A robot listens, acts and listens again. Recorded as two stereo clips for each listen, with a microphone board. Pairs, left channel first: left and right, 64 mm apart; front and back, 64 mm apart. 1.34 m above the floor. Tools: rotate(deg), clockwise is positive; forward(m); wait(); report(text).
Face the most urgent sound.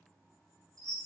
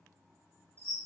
wait()
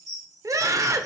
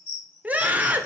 rotate(115)
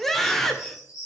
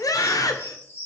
report("Found it: a scream, straight ahead, 1 to 2 m away.")